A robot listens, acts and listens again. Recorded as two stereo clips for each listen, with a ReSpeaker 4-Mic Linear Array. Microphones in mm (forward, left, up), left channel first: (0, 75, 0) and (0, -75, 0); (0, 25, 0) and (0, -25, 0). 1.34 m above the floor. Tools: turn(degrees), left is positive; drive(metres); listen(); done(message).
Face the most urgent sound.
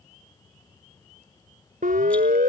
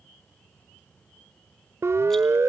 turn(degrees=-65)
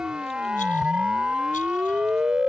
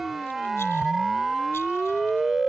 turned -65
done("Found it: a siren, straight ahead.")